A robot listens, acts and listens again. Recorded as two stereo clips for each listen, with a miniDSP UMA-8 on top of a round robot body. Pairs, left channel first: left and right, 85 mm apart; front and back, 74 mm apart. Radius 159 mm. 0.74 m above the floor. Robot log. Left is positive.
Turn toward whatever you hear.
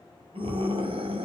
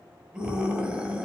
note: The scream: 105° right.
cmd yaw -105
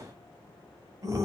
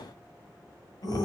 note: The scream is now 40° right.
cmd yaw -40
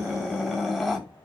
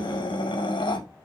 end: Facing the scream.